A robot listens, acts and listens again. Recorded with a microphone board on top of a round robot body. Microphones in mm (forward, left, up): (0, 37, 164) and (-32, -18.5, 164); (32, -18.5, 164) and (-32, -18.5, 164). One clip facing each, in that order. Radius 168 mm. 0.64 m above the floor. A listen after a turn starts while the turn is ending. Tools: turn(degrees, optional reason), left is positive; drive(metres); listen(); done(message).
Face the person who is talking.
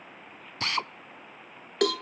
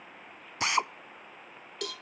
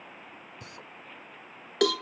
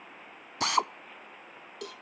listen()
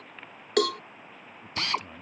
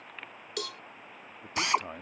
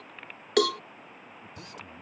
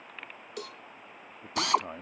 turn(degrees=-160, reason="The man speaking: 160° right.")
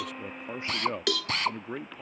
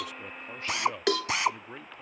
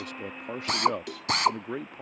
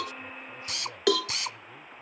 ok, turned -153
done("Facing the man speaking.")